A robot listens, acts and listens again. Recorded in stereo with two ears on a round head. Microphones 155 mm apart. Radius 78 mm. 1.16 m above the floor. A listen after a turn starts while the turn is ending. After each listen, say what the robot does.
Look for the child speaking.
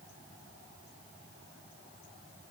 Keep listening.
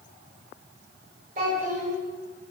Turn 45° right.
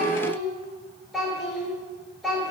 Facing the child speaking, 2 to 4 m away.